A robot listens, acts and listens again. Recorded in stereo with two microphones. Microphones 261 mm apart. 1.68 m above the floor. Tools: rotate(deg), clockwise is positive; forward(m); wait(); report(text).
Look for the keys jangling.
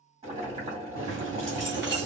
rotate(40)
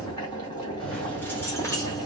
rotate(-15)
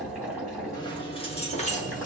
rotate(-30)
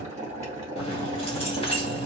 rotate(-20)
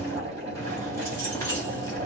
rotate(-10)
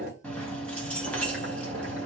report("Facing the keys jangling.")